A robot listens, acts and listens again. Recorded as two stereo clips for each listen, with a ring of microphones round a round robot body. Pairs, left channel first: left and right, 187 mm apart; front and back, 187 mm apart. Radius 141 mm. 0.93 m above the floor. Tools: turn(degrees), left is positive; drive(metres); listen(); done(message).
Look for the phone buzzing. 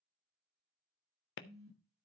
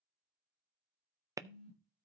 turn(degrees=-60)
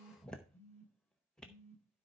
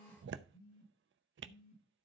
turn(degrees=10)
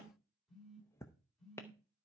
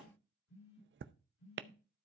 done("Facing the phone buzzing, over 4 m away.")